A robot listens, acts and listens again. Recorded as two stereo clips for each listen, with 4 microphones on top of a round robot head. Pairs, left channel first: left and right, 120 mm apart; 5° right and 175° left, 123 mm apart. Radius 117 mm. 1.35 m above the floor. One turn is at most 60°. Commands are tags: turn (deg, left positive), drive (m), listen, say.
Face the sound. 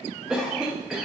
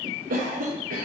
<turn deg="-60"/>
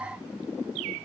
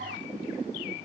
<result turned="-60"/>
<turn deg="-60"/>
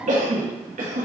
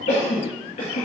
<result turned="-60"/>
<turn deg="-55"/>
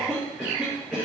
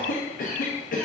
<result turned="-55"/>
<say>Facing the cough.</say>